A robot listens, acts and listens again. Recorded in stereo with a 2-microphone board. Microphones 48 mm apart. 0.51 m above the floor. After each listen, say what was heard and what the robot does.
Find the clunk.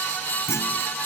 Turn 90° left.
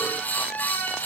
I heard a clunk from this way, but can't make it out now.